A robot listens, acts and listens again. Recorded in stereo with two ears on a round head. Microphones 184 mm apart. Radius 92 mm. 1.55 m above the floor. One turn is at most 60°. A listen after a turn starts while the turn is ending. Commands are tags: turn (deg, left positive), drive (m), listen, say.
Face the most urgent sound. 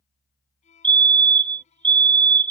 <turn deg="-25"/>
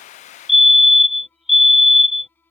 <say>Found it: a fire alarm, straight ahead.</say>